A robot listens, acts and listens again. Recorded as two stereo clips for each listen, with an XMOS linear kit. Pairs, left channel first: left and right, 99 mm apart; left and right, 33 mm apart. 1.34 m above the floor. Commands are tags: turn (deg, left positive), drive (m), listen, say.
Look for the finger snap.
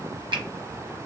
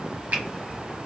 <turn deg="-55"/>
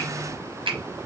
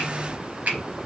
<turn deg="-70"/>
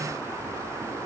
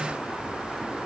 <listen/>
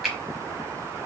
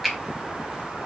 <say>Found it: a finger snap, straight ahead, 1 to 2 m away.</say>